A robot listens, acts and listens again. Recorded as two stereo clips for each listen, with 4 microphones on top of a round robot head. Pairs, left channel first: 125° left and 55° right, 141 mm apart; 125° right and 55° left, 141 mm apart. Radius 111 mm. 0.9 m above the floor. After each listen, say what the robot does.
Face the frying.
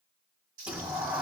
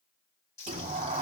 Turn 80° right.
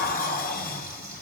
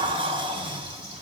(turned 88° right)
Turn 10° left.
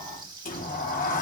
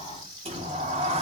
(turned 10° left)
Found it: frying, straight ahead, over 4 m away.